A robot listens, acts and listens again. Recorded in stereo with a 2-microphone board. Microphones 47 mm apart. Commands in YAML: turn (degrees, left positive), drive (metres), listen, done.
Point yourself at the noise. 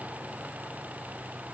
listen: true
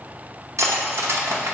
turn: -90
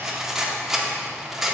turn: -10
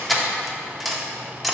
done: "Found it: cutlery clinking, straight ahead, under 1 m away."